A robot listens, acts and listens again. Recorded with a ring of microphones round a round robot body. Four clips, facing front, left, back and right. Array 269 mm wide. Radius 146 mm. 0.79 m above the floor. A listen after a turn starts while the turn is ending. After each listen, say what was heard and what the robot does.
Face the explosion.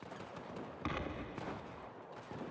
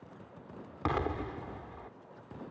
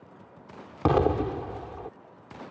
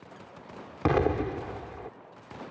The explosion: 150° right. Turn 150° right.
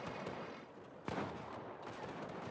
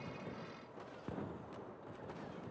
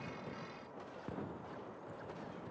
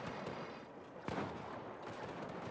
I heard an explosion from this way, but can't make it out now.